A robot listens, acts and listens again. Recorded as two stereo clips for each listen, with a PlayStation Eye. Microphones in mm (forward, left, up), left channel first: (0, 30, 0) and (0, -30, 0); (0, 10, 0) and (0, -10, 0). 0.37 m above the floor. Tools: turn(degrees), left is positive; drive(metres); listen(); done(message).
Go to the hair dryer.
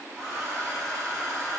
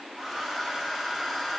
turn(degrees=30)
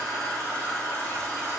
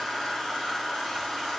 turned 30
turn(degrees=145)
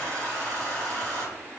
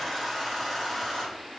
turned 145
turn(degrees=10)
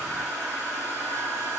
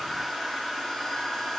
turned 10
drive(metres=1.0)
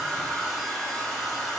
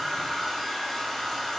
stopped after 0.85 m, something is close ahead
done("Arrived at the hair dryer, straight ahead.")